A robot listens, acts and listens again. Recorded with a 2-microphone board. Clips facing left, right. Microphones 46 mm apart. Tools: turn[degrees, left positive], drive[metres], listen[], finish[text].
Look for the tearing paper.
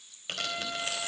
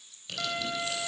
Thought: The tearing paper: about 45° left or 135° left.
Action: turn[45]
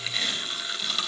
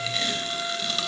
Action: finish[Facing the tearing paper.]